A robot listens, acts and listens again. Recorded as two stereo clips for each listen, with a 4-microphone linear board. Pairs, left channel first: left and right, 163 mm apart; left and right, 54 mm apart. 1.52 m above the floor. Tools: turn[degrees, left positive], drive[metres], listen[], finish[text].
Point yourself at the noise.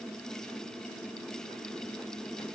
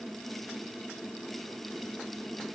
Action: listen[]
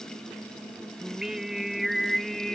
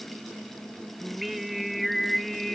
Action: turn[30]
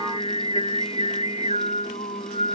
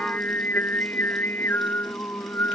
Thought: So it is at 135° left.
Action: turn[135]
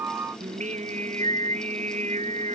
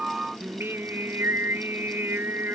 Thought: The singing is now 50° right.
Action: turn[-50]
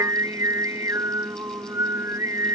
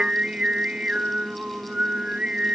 Thought: The singing is now 20° right.
Action: turn[-20]
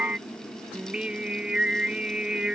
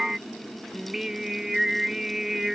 Action: finish[Found it: singing, straight ahead.]